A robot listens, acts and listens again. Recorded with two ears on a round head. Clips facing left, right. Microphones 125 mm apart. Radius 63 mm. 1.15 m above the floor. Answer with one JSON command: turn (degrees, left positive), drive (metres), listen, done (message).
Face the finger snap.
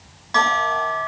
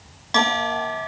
{"listen": true}
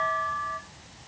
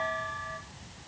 {"listen": true}
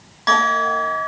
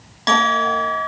{"done": "I can't make out a finger snap to turn to."}